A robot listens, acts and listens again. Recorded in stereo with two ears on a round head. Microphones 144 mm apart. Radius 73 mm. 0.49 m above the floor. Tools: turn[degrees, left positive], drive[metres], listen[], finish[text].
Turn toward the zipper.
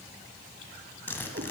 Action: turn[30]
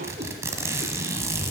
Thought: So it is at 20° right.
Action: turn[-20]
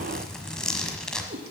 Action: finish[Found it: a zipper, straight ahead, 1 to 2 m away.]